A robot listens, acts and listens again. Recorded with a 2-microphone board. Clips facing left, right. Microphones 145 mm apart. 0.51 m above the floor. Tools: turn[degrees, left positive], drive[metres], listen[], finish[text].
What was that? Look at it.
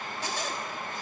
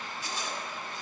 Thought: The zipper: about 75° left or 105° left.
Action: turn[75]
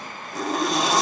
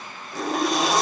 Action: finish[Facing the zipper.]